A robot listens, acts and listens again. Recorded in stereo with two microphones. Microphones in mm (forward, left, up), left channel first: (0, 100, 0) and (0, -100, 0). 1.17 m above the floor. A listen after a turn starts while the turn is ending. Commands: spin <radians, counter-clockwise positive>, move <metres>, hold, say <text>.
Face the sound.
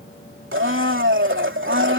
spin -1.57
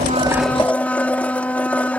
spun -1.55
say Facing the blender.